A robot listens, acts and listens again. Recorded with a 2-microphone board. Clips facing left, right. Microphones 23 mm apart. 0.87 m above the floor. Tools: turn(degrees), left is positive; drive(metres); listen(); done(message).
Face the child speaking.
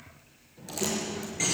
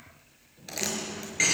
turn(degrees=90)
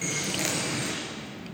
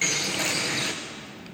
turn(degrees=20)
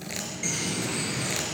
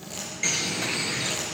done("Facing the child speaking, 2 to 4 m away.")